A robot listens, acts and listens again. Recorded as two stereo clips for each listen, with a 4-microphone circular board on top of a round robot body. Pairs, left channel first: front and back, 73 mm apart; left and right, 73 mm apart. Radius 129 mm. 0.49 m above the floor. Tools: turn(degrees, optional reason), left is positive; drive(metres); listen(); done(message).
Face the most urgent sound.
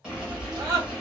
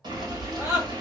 turn(degrees=-135, reason="The scream: 135° right.")
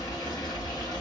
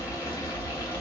listen()
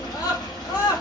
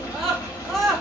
done("Facing the scream.")